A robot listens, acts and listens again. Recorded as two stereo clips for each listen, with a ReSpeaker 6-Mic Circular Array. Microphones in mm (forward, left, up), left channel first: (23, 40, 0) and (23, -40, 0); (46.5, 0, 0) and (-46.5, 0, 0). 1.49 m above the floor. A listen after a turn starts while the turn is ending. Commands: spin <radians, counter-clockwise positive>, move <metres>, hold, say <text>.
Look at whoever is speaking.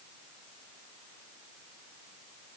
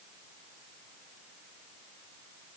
hold
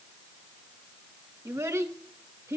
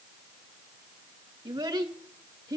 spin -2.53
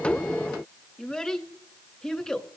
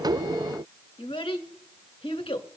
say Facing the child speaking.